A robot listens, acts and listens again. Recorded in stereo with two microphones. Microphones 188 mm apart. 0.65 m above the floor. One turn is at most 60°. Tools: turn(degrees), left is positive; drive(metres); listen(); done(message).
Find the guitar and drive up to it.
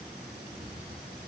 listen()
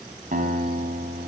turn(degrees=-50)
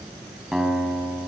drive(metres=1.0)
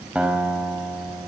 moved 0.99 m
drive(metres=1.0)
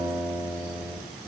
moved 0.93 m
turn(degrees=-10)
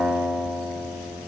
drive(metres=1.0)
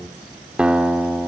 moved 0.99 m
drive(metres=1.0)
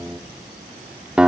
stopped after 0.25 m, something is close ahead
done("Arrived at the guitar, straight ahead.")